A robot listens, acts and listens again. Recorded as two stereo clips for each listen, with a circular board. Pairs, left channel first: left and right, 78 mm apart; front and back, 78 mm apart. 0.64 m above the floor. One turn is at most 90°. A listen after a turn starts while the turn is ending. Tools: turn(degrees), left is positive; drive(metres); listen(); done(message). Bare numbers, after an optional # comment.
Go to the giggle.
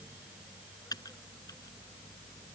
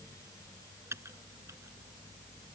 listen()
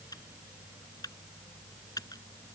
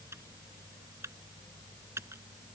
listen()
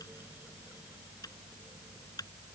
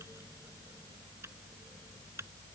done("I can't make out a giggle to turn to.")